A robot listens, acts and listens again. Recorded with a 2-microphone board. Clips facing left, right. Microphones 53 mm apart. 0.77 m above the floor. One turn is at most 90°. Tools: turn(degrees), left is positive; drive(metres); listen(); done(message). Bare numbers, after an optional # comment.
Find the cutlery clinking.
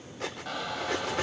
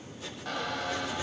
turn(90)
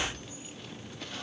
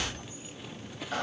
listen()
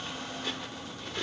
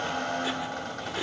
# The cutlery clinking is now 10° right.
turn(-10)
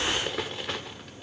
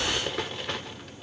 done("Facing the cutlery clinking, 1 to 2 m away.")